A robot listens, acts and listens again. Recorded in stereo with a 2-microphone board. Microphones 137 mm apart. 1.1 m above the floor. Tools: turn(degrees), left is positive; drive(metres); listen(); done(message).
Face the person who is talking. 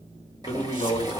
turn(degrees=35)
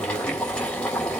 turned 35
listen()
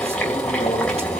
listen()
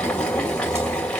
done("I heard a man speaking, but can't make it out now. It was about straight ahead or 110° left.")